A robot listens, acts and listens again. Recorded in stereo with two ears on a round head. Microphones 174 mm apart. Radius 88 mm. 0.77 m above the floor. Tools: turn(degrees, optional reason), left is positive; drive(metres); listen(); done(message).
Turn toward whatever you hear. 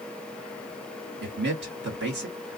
turn(degrees=-60, reason="The man speaking: about 60° right or 120° right.")
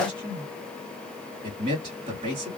turn(degrees=-30, reason="So it is at 30° right.")
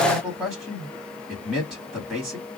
done("Found it: a man speaking, straight ahead.")